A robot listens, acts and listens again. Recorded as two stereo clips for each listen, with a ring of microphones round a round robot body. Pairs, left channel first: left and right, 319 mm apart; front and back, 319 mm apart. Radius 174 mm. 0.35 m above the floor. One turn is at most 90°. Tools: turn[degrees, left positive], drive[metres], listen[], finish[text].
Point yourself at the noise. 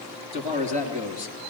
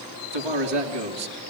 Thought: The man speaking: 160° right.
Action: turn[-90]
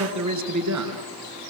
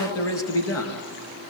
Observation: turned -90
Thought: The man speaking is now 50° right.
Action: turn[-50]
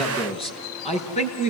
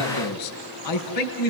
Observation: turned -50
Thought: The man speaking is now 20° left.
Action: turn[20]
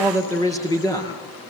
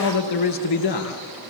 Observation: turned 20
Thought: The man speaking is now 10° left.
Action: turn[10]
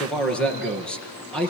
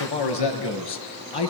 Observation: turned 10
Action: finish[Facing the man speaking.]